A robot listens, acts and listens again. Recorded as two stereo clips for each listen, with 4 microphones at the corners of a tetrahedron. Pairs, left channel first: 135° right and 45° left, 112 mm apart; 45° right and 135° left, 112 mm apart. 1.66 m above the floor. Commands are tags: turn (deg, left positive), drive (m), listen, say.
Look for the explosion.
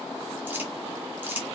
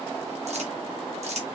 <listen/>
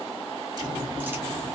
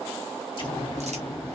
<say>Facing the explosion.</say>